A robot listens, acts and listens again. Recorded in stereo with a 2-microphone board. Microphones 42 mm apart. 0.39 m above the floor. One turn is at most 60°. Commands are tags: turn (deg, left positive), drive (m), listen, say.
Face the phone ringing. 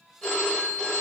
<turn deg="15"/>
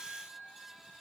<listen/>
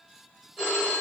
<say>Facing the phone ringing.</say>